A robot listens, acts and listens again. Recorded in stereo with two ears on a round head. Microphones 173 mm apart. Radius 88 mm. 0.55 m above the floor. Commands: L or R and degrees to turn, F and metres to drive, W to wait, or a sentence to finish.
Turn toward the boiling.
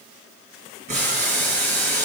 R45
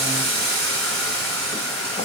R90
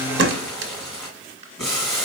Found it: boiling, straight ahead, 2 to 4 m away.